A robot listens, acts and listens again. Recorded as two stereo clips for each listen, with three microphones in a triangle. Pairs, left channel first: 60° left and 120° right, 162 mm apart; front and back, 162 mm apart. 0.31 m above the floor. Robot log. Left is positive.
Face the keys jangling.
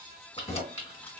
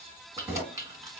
note: The keys jangling: 115° left.
cmd yaw +115
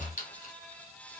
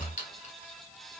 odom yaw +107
note: The keys jangling is now 30° left.
cmd yaw +30
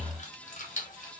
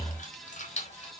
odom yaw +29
note: The keys jangling is now 35° left.
cmd yaw +35
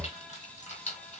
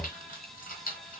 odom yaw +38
note: The keys jangling is now 25° left.
cmd yaw +25
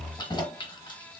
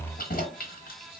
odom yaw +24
end: Facing the keys jangling.